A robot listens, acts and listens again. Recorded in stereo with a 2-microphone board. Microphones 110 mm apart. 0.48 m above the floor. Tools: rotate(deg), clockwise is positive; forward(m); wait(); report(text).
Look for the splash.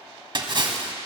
rotate(45)
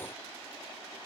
wait()
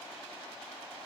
report("I heard a splash, but can't make it out now. It was about straight ahead or 90° right.")